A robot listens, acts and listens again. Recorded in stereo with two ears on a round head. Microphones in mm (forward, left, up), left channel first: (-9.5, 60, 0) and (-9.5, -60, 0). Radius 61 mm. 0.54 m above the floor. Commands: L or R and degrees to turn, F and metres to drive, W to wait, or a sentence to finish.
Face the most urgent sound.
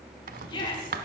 L35
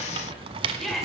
Facing the shout.